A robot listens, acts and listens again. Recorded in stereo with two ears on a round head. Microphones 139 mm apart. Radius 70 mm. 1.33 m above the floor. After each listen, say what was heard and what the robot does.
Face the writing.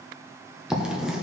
Turn 30° right.
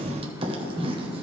So it is at 140° right. Turn 140° right.
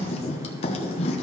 The writing is now 40° left. Turn 40° left.
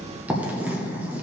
The writing is now 10° right. Turn 10° right.
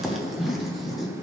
Facing the writing.